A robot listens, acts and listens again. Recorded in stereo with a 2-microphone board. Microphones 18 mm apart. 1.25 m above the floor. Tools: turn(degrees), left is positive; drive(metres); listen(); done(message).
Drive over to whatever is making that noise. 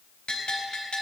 turn(degrees=90)
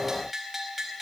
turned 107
turn(degrees=-10)
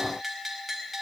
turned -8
drive(metres=1.0)
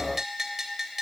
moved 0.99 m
turn(degrees=-15)
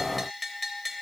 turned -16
drive(metres=1.0)
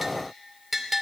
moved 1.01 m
drive(metres=1.0)
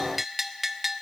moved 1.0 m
turn(degrees=-10)
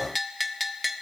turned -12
drive(metres=1.0)
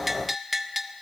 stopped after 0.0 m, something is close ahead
done("I am next to the bell.")